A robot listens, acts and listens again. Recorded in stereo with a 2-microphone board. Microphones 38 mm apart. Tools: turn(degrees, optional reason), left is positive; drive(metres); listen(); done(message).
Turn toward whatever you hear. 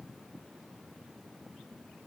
listen()
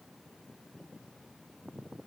listen()
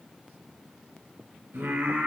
turn(degrees=-90)
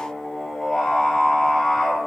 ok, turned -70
done("Facing the singing, 2 to 4 m away.")